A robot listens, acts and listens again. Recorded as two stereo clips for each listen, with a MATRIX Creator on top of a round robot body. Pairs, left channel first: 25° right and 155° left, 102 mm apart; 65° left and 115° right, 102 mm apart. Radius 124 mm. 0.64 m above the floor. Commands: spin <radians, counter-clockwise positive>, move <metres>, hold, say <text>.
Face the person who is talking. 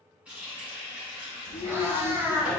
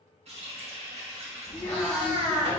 spin -0.17
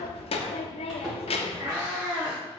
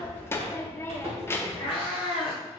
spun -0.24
say Found it: a child speaking, straight ahead.